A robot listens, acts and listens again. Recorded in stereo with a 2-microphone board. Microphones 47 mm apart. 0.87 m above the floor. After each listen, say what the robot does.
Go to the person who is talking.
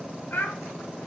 Turn 45° left.
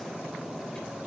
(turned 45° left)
Keep listening.
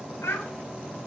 Turn 90° left.
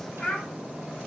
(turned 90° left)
Turn 10° left.
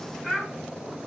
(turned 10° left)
Drive 1.0 m forward.
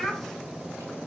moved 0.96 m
Drive 1.0 m forward.
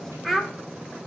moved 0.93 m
Drive 1.0 m forward.
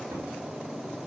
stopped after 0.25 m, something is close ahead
Keep listening.
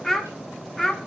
I am next to the child speaking.